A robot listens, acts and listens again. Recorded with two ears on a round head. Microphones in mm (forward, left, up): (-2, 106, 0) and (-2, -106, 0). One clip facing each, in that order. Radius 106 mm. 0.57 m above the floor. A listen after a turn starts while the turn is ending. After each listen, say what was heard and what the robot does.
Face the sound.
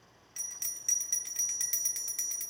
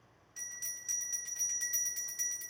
The bell: about 70° left or 110° left. Turn 70° left.
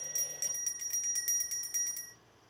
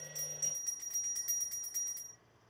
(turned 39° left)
So it is at 50° left. Turn 50° left.
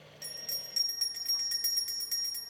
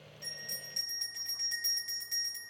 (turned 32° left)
The bell is now 15° left. Turn 15° left.
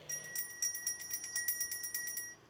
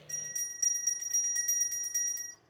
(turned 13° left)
Found it: a bell, straight ahead, 1 to 2 m away.